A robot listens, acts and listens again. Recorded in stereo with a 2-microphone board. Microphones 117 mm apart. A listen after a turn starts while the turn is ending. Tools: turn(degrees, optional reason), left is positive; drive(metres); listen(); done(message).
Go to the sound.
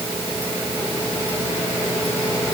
listen()
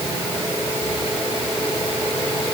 listen()
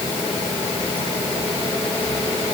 done("I can't make out anything to turn to.")